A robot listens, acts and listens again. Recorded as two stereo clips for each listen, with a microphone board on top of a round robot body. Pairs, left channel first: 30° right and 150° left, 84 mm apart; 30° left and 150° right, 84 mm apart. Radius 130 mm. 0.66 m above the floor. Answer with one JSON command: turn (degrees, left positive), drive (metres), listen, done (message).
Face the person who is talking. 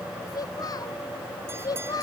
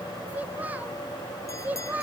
{"turn": -75}
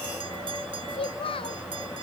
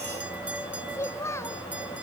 {"turn": -25}
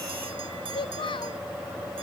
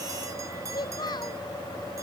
{"done": "Facing the child speaking."}